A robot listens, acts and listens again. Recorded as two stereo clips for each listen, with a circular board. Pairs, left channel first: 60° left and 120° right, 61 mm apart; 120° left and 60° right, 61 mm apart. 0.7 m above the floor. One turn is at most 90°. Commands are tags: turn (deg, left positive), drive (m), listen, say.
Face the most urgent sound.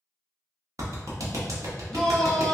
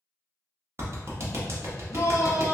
<turn deg="90"/>
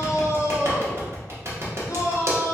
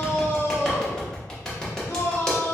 <turn deg="80"/>
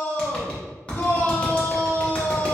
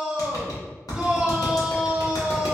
<turn deg="10"/>
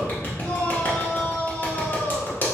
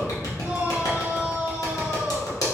<say>Found it: a shout, straight ahead, under 1 m away.</say>